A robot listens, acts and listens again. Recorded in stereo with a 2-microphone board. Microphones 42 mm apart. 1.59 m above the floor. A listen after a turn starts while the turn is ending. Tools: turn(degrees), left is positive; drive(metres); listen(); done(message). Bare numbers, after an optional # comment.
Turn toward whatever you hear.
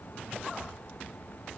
listen()
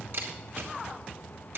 # The camera shutter: about 60° right or 120° right.
turn(-60)
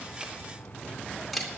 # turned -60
done("Facing the camera shutter.")